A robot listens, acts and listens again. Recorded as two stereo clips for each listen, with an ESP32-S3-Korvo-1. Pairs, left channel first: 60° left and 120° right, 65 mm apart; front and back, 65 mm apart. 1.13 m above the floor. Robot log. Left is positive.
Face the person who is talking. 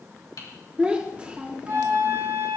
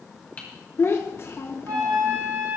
note: The child speaking: 50° right.
cmd yaw -50
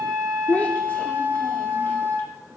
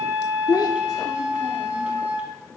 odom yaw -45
end: Found it: a child speaking, straight ahead.